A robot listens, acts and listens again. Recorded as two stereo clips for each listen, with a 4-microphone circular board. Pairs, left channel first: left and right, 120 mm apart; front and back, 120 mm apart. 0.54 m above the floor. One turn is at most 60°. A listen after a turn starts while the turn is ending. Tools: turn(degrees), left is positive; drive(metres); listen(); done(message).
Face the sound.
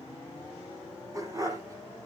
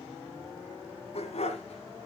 turn(degrees=-30)
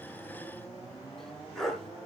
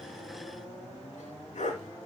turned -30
done("Found it: a dog barking, straight ahead, 2 to 4 m away.")